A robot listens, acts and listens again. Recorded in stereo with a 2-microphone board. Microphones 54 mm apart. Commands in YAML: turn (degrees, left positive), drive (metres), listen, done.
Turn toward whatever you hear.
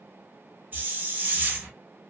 turn: -35
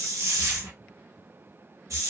turn: -110
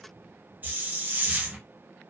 turn: -35
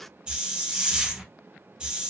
turn: -20
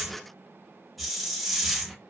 done: "Found it: a hiss, straight ahead, under 1 m away."